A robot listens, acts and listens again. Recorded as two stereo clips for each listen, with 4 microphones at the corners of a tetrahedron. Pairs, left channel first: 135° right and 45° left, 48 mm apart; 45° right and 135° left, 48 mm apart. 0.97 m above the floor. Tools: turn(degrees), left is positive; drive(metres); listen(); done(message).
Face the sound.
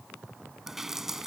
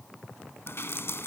turn(degrees=-35)
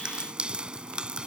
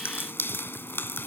turn(degrees=-20)
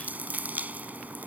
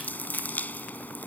done("Found it: dripping, straight ahead.")